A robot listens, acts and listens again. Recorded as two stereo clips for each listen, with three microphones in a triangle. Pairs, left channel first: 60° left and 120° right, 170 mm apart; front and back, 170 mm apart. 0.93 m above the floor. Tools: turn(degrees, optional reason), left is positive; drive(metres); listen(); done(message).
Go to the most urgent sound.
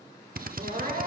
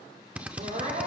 turn(degrees=-145, reason="The crying: 145° right.")
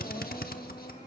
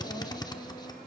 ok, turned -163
turn(degrees=15, reason="Nothing new. It was at 15° left.")
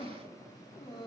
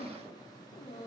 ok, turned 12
drive(metres=1.0)
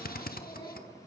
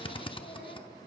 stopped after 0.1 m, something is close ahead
listen()
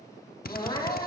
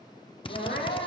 done("Blocked. The crying is further on, straight ahead.")